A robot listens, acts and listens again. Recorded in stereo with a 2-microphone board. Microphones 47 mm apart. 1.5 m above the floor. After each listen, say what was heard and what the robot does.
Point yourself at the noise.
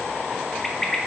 Turn 30° left.
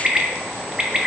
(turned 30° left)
So it is at 20° right. Turn 20° right.
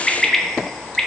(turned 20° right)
Found it: a bird, straight ahead, under 1 m away.